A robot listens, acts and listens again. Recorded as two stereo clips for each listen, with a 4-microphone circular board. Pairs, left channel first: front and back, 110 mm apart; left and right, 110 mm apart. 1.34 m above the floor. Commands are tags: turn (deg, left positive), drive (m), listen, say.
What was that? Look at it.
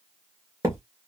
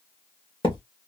<turn deg="125"/>
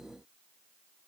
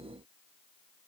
<say>Facing where the thud came from. I can't hear it now.</say>